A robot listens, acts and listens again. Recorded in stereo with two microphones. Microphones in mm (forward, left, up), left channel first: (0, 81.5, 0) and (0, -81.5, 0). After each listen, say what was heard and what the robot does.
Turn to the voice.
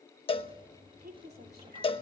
Turn 90° right.
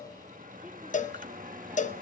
Keep listening.
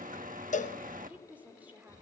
The woman speaking is now 10° right. Turn 10° right.
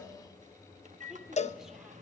Keep listening.
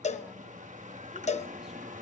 Keep listening.
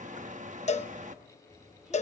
I heard a woman speaking from this way, but can't make it out now.